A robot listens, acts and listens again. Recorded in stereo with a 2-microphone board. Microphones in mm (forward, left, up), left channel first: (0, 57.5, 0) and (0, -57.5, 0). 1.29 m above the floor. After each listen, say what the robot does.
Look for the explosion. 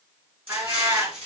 Turn 60° right.
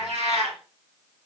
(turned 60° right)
Keep listening.
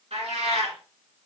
I heard an explosion, but can't make it out now. It was about straight ahead or 60° right.